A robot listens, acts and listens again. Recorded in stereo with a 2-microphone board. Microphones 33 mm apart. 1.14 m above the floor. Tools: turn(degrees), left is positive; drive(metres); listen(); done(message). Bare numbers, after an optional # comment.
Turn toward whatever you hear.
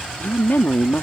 # The woman speaking: about 70° left or 110° left.
turn(70)
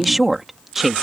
# So it is at 10° right.
turn(-10)
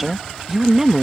# The woman speaking is now 20° right.
turn(-20)
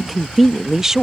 # The woman speaking is now 15° right.
turn(-15)
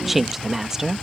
# The woman speaking is now 20° right.
turn(-20)
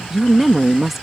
# The woman speaking is now 10° right.
turn(-10)
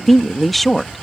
done("Found it: a woman speaking, straight ahead.")